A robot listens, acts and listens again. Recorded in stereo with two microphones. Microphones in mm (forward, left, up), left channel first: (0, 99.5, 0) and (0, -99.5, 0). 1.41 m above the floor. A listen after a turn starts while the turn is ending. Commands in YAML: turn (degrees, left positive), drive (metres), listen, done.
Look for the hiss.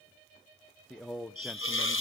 turn: 70
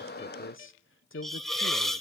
done: "Found it: a hiss, straight ahead, 1 to 2 m away."